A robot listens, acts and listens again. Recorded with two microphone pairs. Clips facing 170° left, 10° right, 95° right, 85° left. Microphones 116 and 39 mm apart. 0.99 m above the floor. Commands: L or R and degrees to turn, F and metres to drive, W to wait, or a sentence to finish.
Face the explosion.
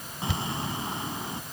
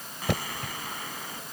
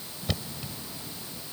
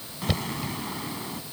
L110
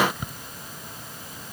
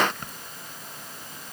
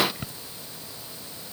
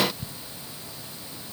I heard an explosion from this way, but can't make it out now.